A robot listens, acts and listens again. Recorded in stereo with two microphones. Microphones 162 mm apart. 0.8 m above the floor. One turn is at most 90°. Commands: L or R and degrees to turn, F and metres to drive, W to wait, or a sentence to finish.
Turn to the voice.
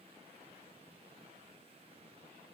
W
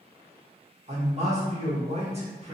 R40
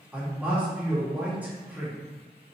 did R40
R10
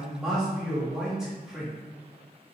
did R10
Facing the man speaking, 1 to 2 m away.